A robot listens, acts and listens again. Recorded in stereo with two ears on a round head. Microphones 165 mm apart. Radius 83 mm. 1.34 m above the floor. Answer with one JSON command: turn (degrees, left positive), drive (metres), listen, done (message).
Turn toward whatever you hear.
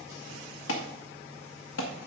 {"turn": 90}
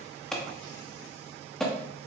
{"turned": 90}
{"done": "Found it: an alarm, straight ahead."}